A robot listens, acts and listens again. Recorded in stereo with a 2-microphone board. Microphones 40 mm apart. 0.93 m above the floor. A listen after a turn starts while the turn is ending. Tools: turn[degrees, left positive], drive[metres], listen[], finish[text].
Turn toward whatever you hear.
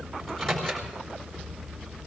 Action: turn[30]
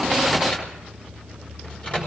Thought: So it is at 140° left.
Action: turn[140]
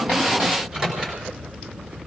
Thought: The microwave is now 25° right.
Action: turn[-25]
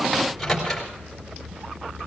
Action: finish[Found it: a microwave, straight ahead, 2 to 4 m away.]